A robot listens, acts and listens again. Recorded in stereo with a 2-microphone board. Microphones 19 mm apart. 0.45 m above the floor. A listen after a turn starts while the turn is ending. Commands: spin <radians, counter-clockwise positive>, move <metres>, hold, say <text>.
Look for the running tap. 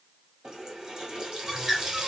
spin -0.52
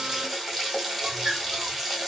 say Found it: a running tap, straight ahead, 1 to 2 m away.